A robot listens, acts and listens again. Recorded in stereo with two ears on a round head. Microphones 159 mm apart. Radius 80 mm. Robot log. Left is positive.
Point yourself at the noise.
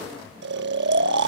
note: The snoring: about 70° right or 110° right.
cmd yaw -70
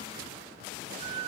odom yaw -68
note: So it is at 30° right.
cmd yaw -30
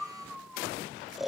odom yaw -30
end: Found it: snoring, straight ahead.